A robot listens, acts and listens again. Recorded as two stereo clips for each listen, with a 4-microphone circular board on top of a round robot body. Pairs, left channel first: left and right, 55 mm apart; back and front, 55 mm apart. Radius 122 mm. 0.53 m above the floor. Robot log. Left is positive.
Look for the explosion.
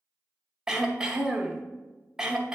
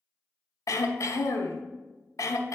cmd idle
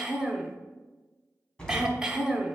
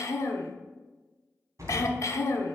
note: The explosion: 20° left.
cmd yaw +20
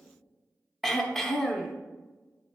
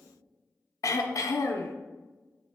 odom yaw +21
end: Facing where the explosion came from. I can't hear it now.